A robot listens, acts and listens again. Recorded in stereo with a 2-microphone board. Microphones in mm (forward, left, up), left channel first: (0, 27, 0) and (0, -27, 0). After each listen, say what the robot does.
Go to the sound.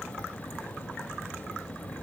Keep listening.
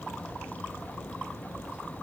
Keep listening.
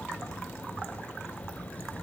I can't make out anything.